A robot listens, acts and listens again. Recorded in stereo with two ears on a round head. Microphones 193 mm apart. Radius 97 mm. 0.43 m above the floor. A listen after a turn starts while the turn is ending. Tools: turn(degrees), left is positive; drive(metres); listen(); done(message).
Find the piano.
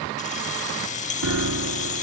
turn(degrees=-70)
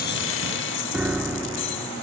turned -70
done("Found it: a piano, straight ahead.")